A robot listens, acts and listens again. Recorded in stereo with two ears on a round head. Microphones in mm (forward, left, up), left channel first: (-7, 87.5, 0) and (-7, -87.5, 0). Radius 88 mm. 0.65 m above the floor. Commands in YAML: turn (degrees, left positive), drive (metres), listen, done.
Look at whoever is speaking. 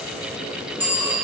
listen: true
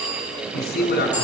turn: 50
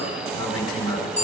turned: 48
turn: 80
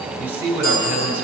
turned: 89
turn: -10
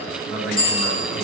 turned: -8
done: "Facing the man speaking."